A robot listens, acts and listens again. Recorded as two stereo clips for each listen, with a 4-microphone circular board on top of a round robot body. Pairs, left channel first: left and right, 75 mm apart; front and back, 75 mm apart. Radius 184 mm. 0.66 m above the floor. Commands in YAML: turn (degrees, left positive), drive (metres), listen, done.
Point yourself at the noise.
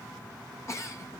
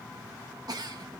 turn: 145
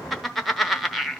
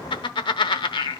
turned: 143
done: "Found it: a giggle, straight ahead."